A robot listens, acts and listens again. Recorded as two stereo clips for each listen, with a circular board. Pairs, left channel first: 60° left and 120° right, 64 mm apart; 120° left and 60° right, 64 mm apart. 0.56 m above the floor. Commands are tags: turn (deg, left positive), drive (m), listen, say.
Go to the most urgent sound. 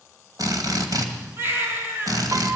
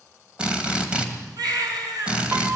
<turn deg="-65"/>
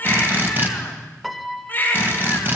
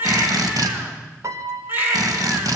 <drive m="1.0"/>
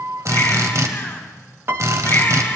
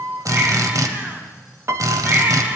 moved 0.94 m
<listen/>
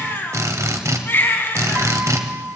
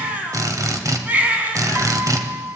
<drive m="1.0"/>
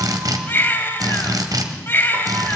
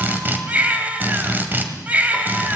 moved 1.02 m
<drive m="1.0"/>
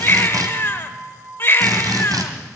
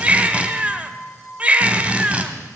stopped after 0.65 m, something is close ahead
<turn deg="10"/>
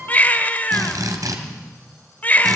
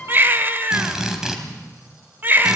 <say>Arrived at the baby crying, straight ahead.</say>